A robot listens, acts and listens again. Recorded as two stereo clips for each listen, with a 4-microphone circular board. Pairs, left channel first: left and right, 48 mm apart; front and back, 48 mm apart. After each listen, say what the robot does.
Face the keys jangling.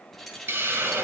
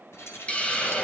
Found it: keys jangling, straight ahead, 2 to 4 m away.